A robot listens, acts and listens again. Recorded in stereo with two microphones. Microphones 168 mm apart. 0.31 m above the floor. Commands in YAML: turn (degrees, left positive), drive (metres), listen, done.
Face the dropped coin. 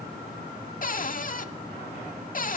listen: true
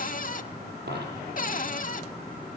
turn: -90
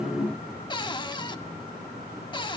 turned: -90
done: "I heard a dropped coin from this way, but can't make it out now."